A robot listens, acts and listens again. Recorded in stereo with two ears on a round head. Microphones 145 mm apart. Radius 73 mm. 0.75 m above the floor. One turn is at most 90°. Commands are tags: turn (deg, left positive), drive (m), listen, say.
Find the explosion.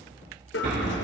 <turn deg="-65"/>
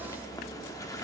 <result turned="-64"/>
<listen/>
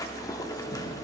<say>I heard an explosion, but can't make it out now. It was about straight ahead or 50° right.</say>